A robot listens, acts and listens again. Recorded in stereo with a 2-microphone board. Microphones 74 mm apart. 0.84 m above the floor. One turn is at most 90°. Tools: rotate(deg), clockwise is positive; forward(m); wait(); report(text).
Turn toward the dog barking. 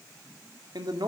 wait()
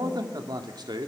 wait()
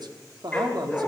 rotate(-30)
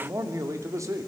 wait()
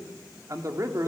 wait()
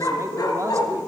rotate(-90)
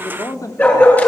rotate(-25)
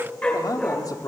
rotate(-20)
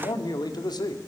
wait()
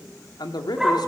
report("Found it: a dog barking, straight ahead, over 4 m away.")